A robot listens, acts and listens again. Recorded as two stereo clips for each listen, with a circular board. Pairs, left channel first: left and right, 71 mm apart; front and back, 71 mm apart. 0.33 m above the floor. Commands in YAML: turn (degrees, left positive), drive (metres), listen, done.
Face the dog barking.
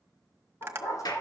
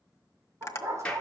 turn: 135
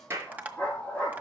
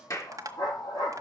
turn: 15
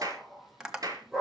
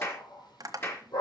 done: "Facing the dog barking, 2 to 4 m away."